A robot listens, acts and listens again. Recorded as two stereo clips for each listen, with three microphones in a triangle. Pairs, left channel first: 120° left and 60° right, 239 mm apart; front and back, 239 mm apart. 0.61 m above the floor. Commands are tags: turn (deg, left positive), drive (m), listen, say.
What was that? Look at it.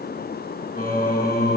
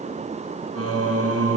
<turn deg="170"/>
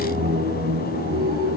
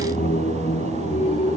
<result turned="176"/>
<turn deg="-65"/>
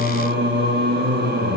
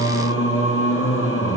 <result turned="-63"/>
<turn deg="-20"/>
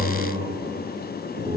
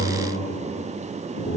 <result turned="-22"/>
<say>Facing the singing.</say>